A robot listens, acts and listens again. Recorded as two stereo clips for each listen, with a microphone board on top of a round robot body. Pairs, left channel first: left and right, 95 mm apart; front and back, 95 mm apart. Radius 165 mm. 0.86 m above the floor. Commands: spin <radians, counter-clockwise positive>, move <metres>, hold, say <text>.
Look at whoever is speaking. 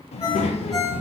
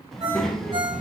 spin 1.57
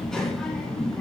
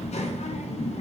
say Found it: a child speaking, straight ahead.